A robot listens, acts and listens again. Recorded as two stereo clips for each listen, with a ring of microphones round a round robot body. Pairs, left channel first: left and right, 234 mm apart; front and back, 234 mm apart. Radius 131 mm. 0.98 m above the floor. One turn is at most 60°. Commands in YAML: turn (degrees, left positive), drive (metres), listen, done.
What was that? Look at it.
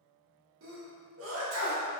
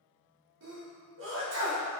turn: -60
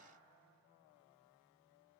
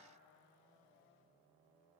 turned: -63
turn: -60
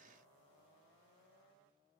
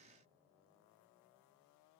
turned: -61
turn: -10
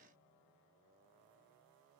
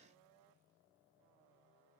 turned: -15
done: "I heard a sneeze from this way, but can't make it out now."